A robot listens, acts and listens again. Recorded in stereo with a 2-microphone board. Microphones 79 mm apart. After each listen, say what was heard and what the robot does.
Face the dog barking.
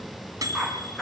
Turn 30° left.
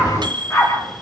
So it is at 140° left. Turn 140° left.
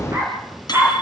The dog barking is now 30° right. Turn 30° right.
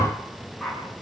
Facing the dog barking, over 4 m away.